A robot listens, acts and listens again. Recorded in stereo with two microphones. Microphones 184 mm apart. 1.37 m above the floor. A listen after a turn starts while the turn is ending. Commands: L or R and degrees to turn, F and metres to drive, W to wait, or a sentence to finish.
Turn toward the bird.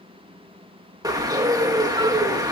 R20
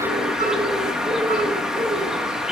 Facing the bird, 1 to 2 m away.